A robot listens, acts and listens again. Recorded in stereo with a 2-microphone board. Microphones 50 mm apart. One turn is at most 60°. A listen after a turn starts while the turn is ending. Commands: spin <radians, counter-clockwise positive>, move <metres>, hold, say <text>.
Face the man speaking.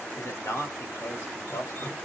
spin 1.05
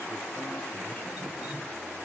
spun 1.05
hold
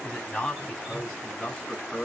spin 0.35
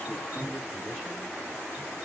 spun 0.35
hold
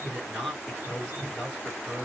say Found it: a man speaking, straight ahead.